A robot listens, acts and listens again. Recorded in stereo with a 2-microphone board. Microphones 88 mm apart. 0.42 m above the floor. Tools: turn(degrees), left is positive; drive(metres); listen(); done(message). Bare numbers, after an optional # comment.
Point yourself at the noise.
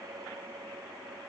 listen()
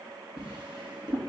# The drawer: about 60° right or 120° right.
turn(-60)
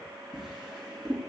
done("Found it: a drawer, straight ahead.")